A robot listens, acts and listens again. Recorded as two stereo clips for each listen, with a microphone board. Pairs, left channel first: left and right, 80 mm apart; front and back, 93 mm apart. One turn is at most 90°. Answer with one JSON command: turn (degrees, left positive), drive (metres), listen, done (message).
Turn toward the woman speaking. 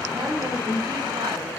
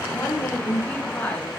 {"turn": -60}
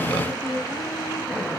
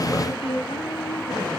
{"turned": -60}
{"turn": -15}
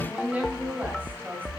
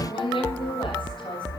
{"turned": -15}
{"turn": -25}
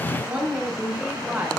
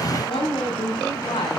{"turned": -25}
{"turn": -25}
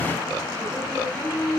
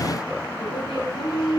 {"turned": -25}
{"done": "Facing the woman speaking."}